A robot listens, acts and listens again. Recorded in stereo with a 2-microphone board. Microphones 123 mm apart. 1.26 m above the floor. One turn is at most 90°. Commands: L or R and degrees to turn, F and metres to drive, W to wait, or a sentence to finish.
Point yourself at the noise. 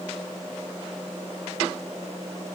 W
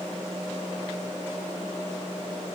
W
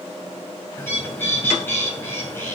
L20
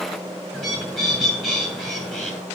Found it: a bird, straight ahead, over 4 m away.